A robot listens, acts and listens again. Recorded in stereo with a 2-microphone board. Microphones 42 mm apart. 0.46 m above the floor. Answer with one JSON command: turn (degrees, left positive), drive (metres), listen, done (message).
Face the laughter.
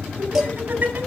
{"turn": -45}
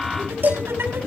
{"turn": -80}
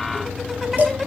{"turn": -10}
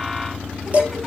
{"listen": true}
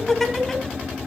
{"done": "Facing the laughter, over 4 m away."}